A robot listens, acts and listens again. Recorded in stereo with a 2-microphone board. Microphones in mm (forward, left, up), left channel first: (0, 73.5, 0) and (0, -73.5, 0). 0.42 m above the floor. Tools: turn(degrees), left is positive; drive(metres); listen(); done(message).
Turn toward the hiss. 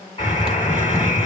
turn(degrees=-60)
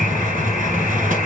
turn(degrees=-65)
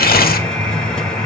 done("Facing the hiss.")